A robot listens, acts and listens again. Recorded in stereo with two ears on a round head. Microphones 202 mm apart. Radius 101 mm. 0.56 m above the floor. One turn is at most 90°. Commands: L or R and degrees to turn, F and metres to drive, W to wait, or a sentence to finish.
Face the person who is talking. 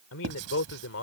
L65
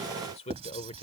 L30
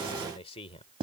L30
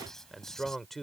Found it: a man speaking, straight ahead.